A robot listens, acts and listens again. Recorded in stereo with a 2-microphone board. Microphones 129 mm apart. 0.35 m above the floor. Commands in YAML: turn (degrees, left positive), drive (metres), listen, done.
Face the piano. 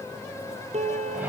turn: -55
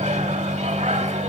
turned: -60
listen: true
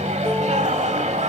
listen: true
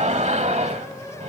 done: "I heard a piano, but can't make it out now. It was about 5° left or 65° right."